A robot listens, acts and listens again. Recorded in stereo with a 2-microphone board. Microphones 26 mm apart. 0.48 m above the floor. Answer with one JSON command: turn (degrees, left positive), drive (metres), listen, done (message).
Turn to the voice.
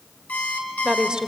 {"turn": -40}
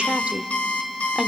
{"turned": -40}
{"turn": -40}
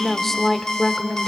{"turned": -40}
{"turn": 30}
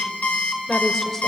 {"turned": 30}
{"turn": 15}
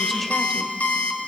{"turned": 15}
{"listen": true}
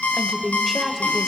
{"done": "Found it: a woman speaking, straight ahead, 1 to 2 m away."}